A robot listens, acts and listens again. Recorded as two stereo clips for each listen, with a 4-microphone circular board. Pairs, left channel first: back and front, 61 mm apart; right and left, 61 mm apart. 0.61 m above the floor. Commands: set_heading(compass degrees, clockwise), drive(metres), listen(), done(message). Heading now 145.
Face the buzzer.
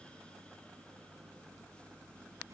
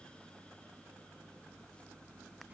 listen()
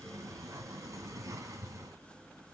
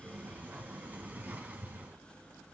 listen()
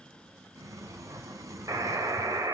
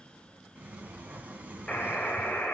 set_heading(160)
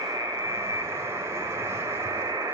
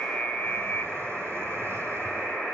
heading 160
done("Found it: a buzzer, straight ahead.")